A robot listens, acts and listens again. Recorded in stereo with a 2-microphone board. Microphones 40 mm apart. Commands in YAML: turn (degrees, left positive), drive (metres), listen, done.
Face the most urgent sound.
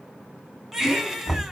turn: -30
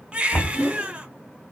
turn: -145
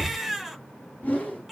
done: "Found it: a baby crying, straight ahead, 1 to 2 m away."